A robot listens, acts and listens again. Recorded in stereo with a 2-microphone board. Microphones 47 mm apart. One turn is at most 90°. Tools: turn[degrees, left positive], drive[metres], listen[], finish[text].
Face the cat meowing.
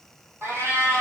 Thought: The cat meowing: about 70° right or 110° right.
Action: turn[-70]
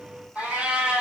Thought: So it is at 20° right.
Action: turn[-20]
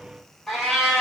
Thought: The cat meowing is now 10° left.
Action: turn[10]
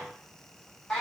Thought: The cat meowing is now 15° left.
Action: turn[15]
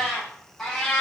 Thought: The cat meowing is now 15° left.
Action: turn[15]
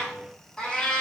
Thought: The cat meowing is now 15° left.
Action: turn[15]
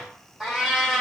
Action: finish[Facing the cat meowing.]